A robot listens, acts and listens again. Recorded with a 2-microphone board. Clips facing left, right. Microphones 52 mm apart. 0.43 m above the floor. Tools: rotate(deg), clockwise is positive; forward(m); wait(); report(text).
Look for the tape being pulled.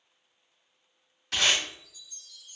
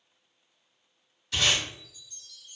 rotate(-90)
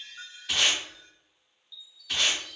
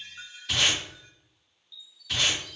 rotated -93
report("Facing the tape being pulled.")